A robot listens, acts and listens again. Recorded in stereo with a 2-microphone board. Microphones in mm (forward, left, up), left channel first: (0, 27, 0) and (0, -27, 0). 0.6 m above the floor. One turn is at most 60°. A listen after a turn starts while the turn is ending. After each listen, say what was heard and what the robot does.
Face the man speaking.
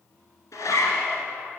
Keep listening.
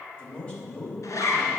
The man speaking: about 20° left or 160° left. Turn 20° left.
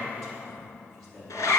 Turn 30° left.
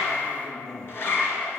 So it is at 25° right. Turn 25° right.
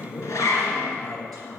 Found it: a man speaking, straight ahead, over 4 m away.